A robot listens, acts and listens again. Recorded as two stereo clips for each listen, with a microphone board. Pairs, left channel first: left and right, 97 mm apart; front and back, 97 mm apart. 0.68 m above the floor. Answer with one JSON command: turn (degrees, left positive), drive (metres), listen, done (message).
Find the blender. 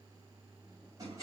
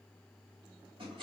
{"listen": true}
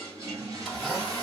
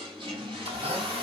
{"turn": -175}
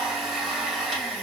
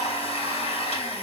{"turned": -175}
{"done": "Facing the blender."}